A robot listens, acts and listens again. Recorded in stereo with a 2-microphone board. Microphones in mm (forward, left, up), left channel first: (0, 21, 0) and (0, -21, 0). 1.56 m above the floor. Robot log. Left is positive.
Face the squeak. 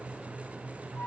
cmd idle
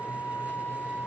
cmd idle
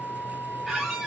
cmd yaw -30
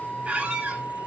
note: So it is at 145° right.
cmd yaw -145
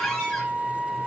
end: Facing the squeak, 2 to 4 m away.